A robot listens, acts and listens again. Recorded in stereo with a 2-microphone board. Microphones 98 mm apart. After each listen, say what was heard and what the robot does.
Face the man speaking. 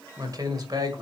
The man speaking: about 45° right or 135° right. Turn 45° right.
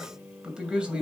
So it is at 10° right. Turn 10° right.
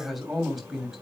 Facing the man speaking.